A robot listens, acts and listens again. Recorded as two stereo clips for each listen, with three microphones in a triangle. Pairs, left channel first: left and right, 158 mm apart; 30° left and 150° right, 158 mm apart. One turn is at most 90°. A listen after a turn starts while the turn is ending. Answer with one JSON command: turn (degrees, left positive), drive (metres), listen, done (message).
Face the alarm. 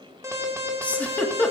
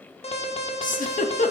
{"turn": -20}
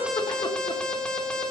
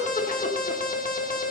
{"done": "Found it: an alarm, straight ahead."}